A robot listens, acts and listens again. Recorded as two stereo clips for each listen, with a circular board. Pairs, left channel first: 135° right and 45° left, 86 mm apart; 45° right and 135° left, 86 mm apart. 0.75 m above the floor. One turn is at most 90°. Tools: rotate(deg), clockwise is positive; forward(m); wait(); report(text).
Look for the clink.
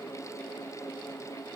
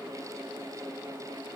wait()
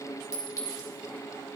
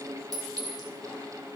rotate(-90)
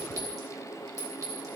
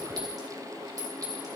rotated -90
rotate(-90)
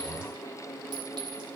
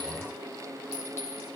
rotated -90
wait()
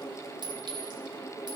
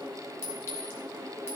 rotate(-15)
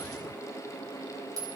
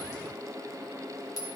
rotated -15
report("Found it: a clink, straight ahead.")